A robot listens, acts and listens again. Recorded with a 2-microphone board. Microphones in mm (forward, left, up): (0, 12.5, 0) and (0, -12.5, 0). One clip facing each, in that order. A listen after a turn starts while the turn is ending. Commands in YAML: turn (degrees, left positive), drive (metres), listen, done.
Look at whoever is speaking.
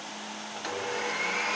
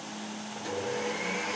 listen: true
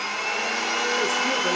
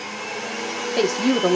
turn: -65
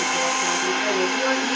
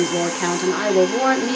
turn: -55
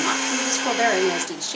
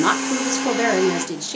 done: "Facing the woman speaking."